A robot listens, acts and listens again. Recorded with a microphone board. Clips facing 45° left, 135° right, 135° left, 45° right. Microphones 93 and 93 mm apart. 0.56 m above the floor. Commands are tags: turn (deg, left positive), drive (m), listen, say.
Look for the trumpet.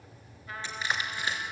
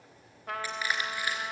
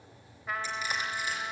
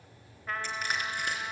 <turn deg="-140"/>
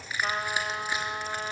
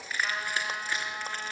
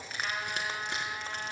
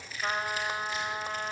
<say>Facing the trumpet, 1 to 2 m away.</say>